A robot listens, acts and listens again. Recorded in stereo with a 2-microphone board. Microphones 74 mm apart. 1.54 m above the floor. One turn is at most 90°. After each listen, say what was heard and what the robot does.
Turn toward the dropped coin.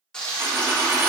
The dropped coin: about 35° right or 145° right. Turn 35° right.
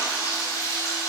Keep listening.
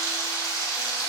I heard a dropped coin, but can't make it out now. It was about straight ahead or 110° right.